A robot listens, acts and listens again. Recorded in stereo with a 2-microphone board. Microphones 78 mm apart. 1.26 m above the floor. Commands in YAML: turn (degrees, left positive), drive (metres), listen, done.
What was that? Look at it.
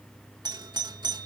turn: -70
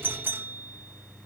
turn: -30
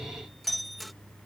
done: "Found it: a doorbell, straight ahead."